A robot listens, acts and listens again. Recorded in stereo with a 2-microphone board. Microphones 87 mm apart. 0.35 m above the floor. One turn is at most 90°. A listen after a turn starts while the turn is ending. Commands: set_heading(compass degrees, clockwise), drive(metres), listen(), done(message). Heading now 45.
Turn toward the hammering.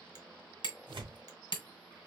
set_heading(340)
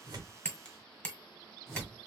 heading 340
set_heading(320)
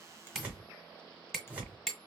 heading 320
done("Found it: hammering, straight ahead, 1 to 2 m away.")